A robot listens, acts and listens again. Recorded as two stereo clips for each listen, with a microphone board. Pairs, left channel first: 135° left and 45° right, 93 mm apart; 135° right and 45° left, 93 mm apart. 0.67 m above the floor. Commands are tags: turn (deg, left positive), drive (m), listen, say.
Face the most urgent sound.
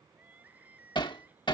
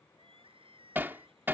<turn deg="30"/>
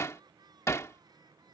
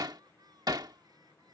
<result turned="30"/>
<say>Facing the crying.</say>